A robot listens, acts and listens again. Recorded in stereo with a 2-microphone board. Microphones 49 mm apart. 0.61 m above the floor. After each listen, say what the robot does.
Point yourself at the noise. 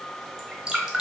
Turn 30° right.
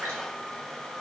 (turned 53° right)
Keep listening.
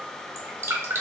Turn 115° right.
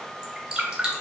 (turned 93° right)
Turn 25° right.
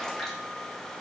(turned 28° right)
Keep listening.
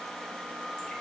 Keep listening.
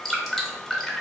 Facing the dripping.